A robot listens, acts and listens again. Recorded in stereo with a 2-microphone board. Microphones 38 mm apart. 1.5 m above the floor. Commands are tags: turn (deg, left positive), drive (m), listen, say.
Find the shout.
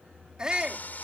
<turn deg="-20"/>
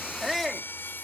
<say>Found it: a shout, straight ahead.</say>